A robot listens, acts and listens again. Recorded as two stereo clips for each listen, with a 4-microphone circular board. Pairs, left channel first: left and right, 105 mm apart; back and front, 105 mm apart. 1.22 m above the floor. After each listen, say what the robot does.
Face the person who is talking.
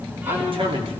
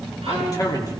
Turn 125° right.
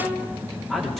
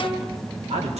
Found it: a man speaking, straight ahead.